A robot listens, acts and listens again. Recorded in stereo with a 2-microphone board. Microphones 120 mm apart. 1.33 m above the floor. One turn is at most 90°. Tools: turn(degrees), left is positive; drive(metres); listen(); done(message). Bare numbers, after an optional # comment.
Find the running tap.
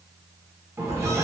# The running tap: about 20° right or 160° right.
turn(-20)
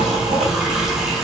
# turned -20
listen()
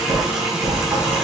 done("Found it: a running tap, straight ahead, under 1 m away.")